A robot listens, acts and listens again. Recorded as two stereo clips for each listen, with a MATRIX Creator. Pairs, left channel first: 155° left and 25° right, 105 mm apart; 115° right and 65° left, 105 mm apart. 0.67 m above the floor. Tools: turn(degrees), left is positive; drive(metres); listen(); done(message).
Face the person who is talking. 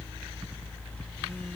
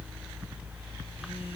listen()
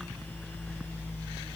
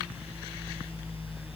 listen()
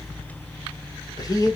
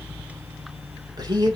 turn(degrees=110)
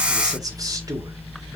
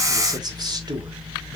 listen()
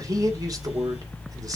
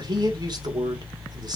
turn(degrees=30)
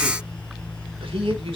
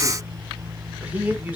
done("Found it: a man speaking, straight ahead.")